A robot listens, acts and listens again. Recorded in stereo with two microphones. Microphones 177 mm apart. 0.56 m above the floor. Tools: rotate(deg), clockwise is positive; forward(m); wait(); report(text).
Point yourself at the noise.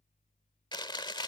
rotate(-25)
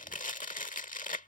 rotate(-130)
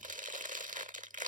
rotate(50)
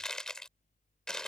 report("Facing the chewing.")